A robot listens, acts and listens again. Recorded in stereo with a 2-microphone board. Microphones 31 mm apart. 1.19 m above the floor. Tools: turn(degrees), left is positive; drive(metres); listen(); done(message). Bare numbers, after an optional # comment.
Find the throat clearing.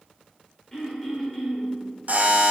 turn(30)
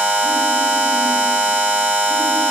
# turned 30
listen()
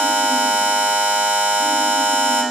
listen()
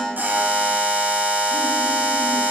done("I heard throat clearing, but can't make it out now. It was about 15° right or 135° left.")